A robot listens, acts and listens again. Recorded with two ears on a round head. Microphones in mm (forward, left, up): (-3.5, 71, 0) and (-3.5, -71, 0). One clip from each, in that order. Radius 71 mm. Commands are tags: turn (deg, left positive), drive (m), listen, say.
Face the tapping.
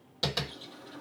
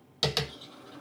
<turn deg="-55"/>
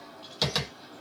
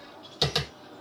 <say>Facing the tapping.</say>